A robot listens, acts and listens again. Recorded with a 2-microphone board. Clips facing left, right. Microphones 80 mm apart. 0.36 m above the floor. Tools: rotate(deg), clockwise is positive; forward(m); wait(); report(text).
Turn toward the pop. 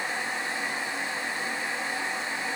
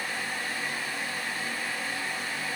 wait()
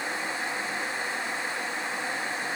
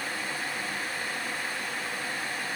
wait()
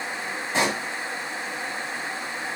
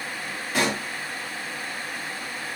rotate(-25)
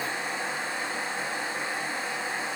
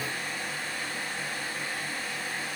wait()
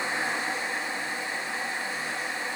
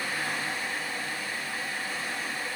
report("I heard a pop, but can't make it out now. It was about straight ahead or 130° left.")